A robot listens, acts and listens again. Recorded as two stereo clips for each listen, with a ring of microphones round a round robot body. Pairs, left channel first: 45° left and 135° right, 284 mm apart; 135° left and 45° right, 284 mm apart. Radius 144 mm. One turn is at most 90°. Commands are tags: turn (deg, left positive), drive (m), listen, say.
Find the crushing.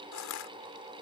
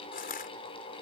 <turn deg="75"/>
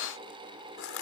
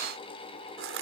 <say>Found it: crushing, straight ahead.</say>